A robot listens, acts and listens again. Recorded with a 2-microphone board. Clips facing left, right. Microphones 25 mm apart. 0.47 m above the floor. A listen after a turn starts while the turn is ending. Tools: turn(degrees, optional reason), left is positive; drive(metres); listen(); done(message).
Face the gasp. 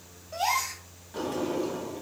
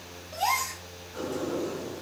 turn(degrees=15, reason="The gasp: about 15° left or 165° left.")
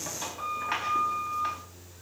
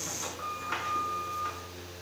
listen()
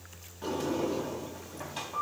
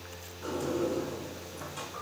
done("I heard a gasp, but can't make it out now. It was about straight ahead or 150° left.")